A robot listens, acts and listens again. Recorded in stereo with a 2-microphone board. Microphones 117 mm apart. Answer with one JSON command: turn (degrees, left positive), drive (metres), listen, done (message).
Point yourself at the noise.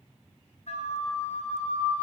{"turn": 65}
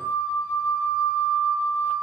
{"turn": 25}
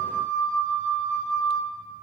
{"turn": 10}
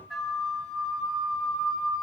{"done": "Found it: a flute, straight ahead, under 1 m away."}